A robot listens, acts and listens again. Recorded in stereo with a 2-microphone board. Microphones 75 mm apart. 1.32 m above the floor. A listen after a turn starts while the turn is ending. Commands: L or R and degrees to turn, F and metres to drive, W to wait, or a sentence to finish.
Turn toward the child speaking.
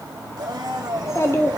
L35
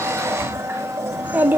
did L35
R30
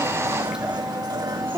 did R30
R30
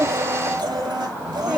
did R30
R10
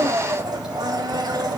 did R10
W
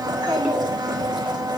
R10
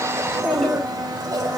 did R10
Facing the child speaking.